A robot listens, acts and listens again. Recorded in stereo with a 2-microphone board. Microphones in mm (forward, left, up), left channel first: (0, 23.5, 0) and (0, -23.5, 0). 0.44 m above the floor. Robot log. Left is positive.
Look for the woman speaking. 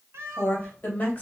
note: The woman speaking: about 30° left or 150° left.
cmd yaw +30
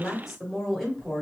note: So it is at 10° right.
cmd yaw -10
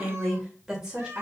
note: The woman speaking is now 20° right.
cmd yaw -20
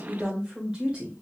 note: The woman speaking is now 25° right.
cmd yaw -25
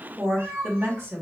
note: The woman speaking is now 30° right.
cmd yaw -30
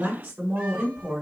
note: The woman speaking is now 30° right.
cmd yaw -30
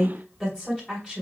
note: The woman speaking is now 10° left.
cmd yaw +10
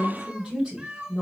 end: Found it: a woman speaking, straight ahead.